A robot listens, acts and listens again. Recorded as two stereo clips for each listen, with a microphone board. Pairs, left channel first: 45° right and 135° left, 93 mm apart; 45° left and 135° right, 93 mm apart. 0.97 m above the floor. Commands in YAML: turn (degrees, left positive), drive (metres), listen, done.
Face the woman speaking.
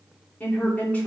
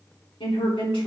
turn: 25
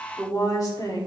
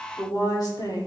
done: "Found it: a woman speaking, straight ahead."